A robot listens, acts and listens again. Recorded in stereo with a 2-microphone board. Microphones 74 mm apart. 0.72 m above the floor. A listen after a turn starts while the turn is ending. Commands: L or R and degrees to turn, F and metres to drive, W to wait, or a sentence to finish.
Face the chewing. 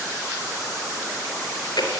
L70
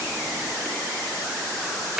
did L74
Facing the chewing, over 4 m away.